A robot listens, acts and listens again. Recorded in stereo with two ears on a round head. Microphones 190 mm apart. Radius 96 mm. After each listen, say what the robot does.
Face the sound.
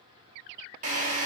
Turn 35° right.
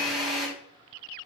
Facing the drill.